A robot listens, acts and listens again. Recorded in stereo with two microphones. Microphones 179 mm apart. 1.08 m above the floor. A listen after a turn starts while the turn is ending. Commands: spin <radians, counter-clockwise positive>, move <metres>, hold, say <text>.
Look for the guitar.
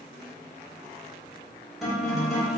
spin 0.52
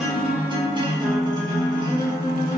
spin -0.52
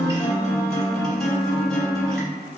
say Facing the guitar, 1 to 2 m away.